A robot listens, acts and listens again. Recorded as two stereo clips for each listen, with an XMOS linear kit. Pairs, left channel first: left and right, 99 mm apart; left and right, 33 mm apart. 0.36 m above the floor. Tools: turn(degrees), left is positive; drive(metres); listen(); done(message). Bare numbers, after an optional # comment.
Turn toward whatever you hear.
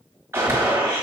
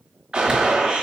# The gunshot: about 25° right or 155° right.
turn(-25)
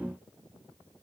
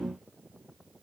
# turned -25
listen()
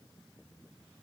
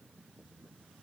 done("I heard a gunshot, but can't make it out now. It was about straight ahead or 130° right.")